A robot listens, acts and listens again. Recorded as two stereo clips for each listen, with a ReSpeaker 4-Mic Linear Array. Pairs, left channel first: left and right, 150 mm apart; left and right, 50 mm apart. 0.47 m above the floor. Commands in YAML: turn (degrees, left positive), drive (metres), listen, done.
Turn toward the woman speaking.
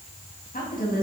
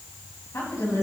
turn: 70
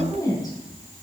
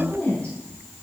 turn: 25
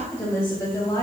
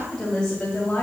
turn: 25
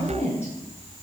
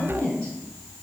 turn: 15
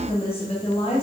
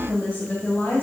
turn: 25
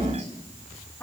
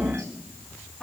turn: 10
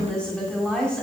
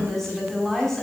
done: "Found it: a woman speaking, straight ahead."